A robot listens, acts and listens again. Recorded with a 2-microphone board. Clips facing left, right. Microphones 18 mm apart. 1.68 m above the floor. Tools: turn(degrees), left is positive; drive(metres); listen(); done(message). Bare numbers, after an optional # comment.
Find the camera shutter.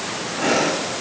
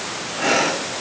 listen()
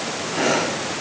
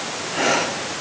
listen()
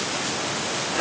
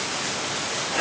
done("I can't make out a camera shutter, only breathing.")